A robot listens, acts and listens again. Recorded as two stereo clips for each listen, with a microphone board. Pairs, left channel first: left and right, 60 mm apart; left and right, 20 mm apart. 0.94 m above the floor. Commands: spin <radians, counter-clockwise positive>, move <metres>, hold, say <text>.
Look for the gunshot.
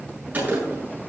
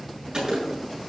spin -0.52
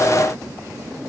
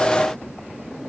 hold
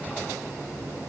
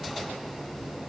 say I heard a gunshot, but can't make it out now. It was about straight ahead or 120° right.